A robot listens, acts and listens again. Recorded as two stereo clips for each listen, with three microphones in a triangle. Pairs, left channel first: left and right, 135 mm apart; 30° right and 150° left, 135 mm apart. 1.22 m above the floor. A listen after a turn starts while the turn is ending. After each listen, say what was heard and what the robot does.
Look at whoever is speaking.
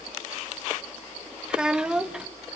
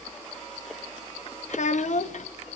Facing the child speaking.